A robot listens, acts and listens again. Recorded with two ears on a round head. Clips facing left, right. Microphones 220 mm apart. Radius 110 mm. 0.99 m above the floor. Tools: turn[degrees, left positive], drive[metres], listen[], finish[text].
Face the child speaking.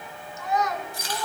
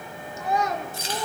Action: turn[-30]
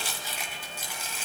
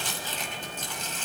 Action: listen[]
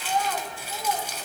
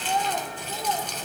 Action: turn[-30]
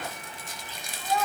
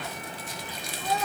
Thought: So it is at 145° right.
Action: turn[-145]
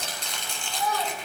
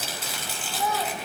Action: finish[Facing the child speaking.]